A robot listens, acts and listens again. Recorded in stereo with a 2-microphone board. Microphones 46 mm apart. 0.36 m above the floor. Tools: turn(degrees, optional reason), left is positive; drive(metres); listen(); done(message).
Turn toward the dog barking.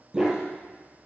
turn(degrees=-30)
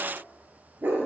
turn(degrees=-140, reason="So it is at 140° right.")
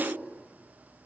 listen()
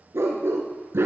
turn(degrees=-70, reason="The dog barking is now 70° right.")
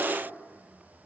listen()
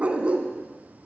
turn(degrees=-30, reason="The dog barking is now 30° right.")
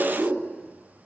turn(degrees=-10, reason="The dog barking is now 10° right.")
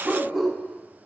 done("Facing the dog barking.")